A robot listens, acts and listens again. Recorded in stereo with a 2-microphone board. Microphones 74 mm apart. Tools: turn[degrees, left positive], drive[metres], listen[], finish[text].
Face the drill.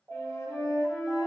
Action: listen[]
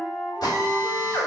Thought: The drill: about 60° left or 120° left.
Action: turn[60]
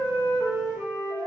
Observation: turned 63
Action: listen[]
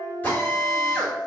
Thought: So it is at 30° left.
Action: turn[30]
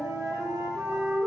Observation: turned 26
Action: listen[]
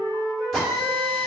Action: finish[Facing the drill, 1 to 2 m away.]